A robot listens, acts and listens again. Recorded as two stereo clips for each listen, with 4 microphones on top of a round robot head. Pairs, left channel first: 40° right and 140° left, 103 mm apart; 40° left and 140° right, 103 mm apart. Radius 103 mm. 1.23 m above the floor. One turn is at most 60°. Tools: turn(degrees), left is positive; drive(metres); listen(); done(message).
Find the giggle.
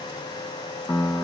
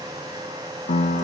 listen()
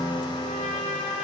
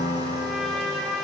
listen()
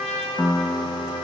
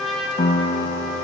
done("I can't make out a giggle, only a trumpet and a piano.")